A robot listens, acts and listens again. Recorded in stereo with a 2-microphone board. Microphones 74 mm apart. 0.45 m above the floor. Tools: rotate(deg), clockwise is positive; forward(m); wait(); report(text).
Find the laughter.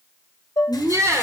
rotate(45)
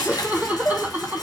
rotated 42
rotate(25)
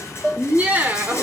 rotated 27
rotate(25)
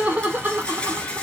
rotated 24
rotate(30)
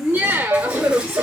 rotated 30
rotate(35)
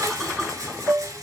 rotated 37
wait()
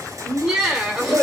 rotate(10)
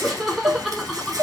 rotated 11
report("Facing the laughter.")